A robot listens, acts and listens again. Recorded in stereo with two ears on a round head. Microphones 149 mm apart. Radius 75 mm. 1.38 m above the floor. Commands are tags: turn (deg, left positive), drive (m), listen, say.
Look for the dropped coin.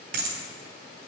<turn deg="-55"/>
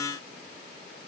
<listen/>
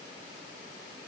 <say>I heard a dropped coin, but can't make it out now. It was about straight ahead or 70° right.</say>